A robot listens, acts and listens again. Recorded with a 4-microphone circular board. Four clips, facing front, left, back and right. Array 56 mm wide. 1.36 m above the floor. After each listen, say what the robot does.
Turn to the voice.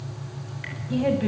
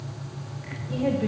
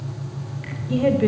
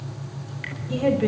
Turn 150° right.
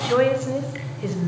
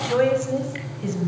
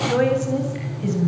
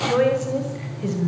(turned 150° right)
Turn 15° right.
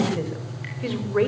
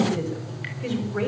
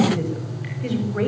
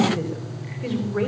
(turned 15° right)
Found it: a woman speaking, straight ahead, over 4 m away.